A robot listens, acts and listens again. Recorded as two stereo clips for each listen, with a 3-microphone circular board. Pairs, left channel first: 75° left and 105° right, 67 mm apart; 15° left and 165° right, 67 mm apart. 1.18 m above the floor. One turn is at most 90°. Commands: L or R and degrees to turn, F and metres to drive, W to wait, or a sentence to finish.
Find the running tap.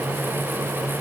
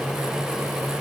W
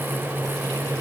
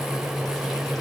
W
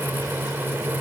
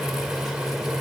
I can't make out a running tap to turn to.